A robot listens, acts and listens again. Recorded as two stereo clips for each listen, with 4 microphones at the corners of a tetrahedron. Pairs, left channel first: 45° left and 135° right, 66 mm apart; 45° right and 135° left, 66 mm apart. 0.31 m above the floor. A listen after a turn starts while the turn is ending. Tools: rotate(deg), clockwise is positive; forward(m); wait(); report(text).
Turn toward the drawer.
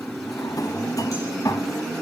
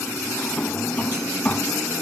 rotate(-25)
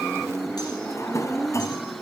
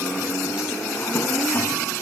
rotate(-10)
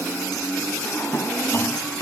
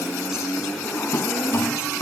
report("Facing the drawer, 1 to 2 m away.")